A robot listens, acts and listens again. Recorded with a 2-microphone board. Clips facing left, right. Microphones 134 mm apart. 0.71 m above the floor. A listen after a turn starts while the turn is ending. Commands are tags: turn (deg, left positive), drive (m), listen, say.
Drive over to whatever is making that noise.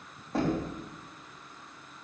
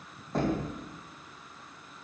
<turn deg="30"/>
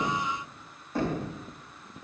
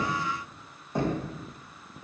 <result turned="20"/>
<turn deg="-20"/>
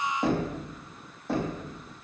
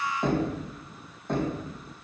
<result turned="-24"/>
<drive m="1.0"/>
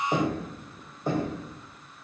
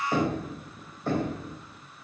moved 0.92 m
<turn deg="15"/>
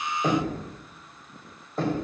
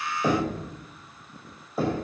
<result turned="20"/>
<drive m="1.0"/>
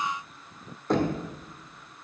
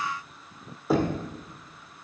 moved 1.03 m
<drive m="1.0"/>
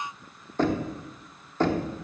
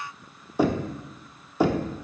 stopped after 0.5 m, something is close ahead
<turn deg="-10"/>
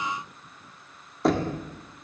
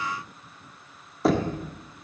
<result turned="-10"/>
<say>I am next to the knocking.</say>